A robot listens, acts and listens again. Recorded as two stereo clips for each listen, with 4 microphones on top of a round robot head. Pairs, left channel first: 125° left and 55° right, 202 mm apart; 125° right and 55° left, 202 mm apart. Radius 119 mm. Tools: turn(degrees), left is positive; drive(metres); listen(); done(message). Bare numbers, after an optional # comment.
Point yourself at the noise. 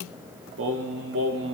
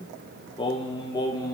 # The singing: 55° right.
turn(-55)
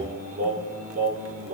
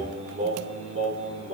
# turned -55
done("Found it: singing, straight ahead.")